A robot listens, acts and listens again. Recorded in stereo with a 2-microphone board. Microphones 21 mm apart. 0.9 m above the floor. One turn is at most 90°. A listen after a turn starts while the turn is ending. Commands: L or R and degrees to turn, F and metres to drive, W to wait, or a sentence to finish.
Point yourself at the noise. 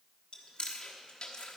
L45
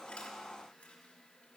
W
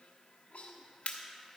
L90
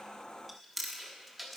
Facing the chewing, 1 to 2 m away.